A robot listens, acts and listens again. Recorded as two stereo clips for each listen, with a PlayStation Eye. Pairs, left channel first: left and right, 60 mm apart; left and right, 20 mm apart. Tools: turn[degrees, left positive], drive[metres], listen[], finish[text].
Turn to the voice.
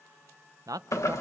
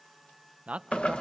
Action: turn[-90]
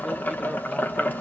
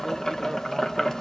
Action: listen[]
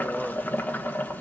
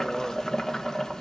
Action: listen[]
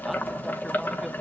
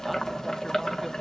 Action: finish[Facing where the man speaking came from. I can't hear it now.]